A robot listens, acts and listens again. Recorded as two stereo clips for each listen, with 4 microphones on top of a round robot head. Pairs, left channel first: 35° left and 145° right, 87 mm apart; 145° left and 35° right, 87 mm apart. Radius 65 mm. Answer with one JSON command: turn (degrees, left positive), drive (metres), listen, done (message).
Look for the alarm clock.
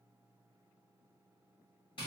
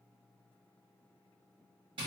{"listen": true}
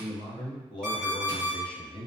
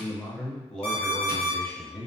{"turn": 115}
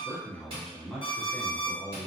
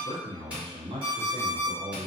{"done": "Found it: an alarm clock, straight ahead, 1 to 2 m away."}